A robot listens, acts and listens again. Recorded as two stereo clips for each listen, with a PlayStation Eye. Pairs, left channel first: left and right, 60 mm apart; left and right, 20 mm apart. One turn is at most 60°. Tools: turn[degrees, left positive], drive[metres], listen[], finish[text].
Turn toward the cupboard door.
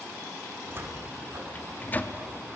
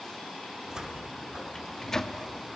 Thought: The cupboard door: about 40° right or 140° right.
Action: turn[-40]
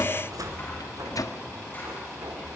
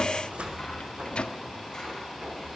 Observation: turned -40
Thought: So it is at 100° right.
Action: turn[-60]
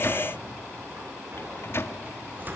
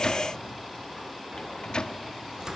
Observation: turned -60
Thought: The cupboard door is now 35° right.
Action: turn[-35]
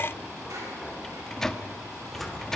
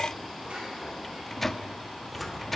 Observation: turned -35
Action: finish[Facing the cupboard door, 2 to 4 m away.]